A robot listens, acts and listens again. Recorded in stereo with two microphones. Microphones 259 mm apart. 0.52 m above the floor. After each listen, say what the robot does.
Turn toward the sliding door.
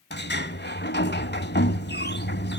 Turn 40° left.
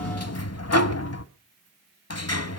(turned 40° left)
Turn 95° left.
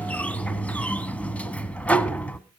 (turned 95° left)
Found it: a sliding door, straight ahead.